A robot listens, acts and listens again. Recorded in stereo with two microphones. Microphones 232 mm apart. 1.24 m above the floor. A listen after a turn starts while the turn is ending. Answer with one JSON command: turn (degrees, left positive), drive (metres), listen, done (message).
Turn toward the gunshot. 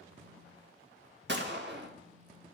{"turn": -50}
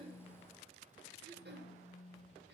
{"listen": true}
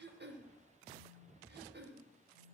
{"done": "I heard a gunshot, but can't make it out now. It was about straight ahead or 80° right."}